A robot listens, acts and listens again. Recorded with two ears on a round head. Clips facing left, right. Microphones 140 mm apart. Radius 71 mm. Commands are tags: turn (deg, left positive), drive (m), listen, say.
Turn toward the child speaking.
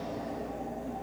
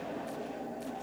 <listen/>
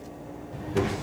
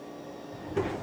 <turn deg="65"/>
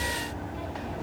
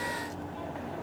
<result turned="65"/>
<turn deg="15"/>
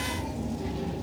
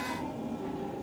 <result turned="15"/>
<turn deg="20"/>
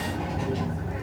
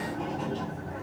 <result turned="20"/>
<turn deg="20"/>
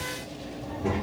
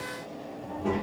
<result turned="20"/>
<say>Found it: a child speaking, straight ahead.</say>